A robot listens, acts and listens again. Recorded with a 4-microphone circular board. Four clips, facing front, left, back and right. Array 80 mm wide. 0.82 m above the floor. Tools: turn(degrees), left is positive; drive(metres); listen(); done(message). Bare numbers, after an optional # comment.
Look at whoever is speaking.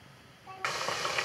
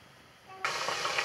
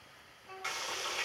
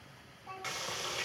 # The child speaking: 40° right.
turn(-40)
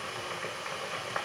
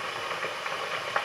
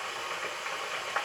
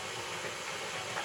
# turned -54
# Nothing new. It was at 15° left.
turn(15)
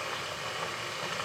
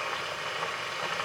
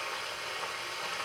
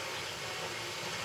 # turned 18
listen()
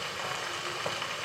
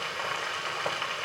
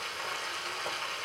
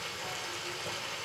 done("Facing where the child speaking came from. I can't hear it now.")